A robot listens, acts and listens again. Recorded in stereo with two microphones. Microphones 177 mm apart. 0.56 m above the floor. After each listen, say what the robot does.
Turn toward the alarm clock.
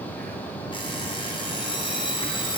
Turn 30° left.
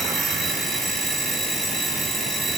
Facing the alarm clock, 2 to 4 m away.